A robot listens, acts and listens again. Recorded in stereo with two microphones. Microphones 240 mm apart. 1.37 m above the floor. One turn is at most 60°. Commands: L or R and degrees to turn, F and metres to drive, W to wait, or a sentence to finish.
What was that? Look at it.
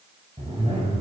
R25
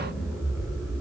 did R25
Found it: a zipper, straight ahead, 2 to 4 m away.